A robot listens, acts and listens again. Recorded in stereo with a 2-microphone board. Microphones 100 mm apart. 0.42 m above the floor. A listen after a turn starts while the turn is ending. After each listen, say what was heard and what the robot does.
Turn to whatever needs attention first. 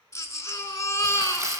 The baby crying: about 30° left or 150° left. Turn 30° left.
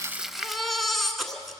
Found it: a baby crying, straight ahead, 1 to 2 m away.